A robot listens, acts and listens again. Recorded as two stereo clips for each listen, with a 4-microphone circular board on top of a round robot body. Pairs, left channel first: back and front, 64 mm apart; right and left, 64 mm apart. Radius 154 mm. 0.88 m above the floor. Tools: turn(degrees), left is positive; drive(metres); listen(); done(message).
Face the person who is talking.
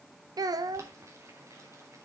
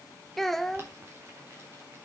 done("Facing the child speaking, 1 to 2 m away.")